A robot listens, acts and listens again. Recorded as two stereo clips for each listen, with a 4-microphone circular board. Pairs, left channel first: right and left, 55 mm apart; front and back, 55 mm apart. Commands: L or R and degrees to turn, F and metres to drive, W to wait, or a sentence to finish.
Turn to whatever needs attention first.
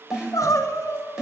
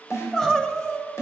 R80
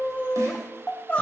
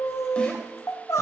R20
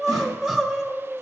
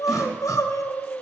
Found it: crying, straight ahead, 1 to 2 m away.